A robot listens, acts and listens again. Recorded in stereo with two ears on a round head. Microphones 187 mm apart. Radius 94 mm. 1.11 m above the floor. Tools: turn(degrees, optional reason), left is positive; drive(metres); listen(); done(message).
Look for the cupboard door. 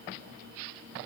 listen()
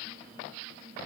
listen()
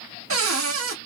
turn(degrees=-65, reason="The cupboard door: about 65° right or 115° right.")
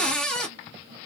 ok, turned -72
done("Facing the cupboard door.")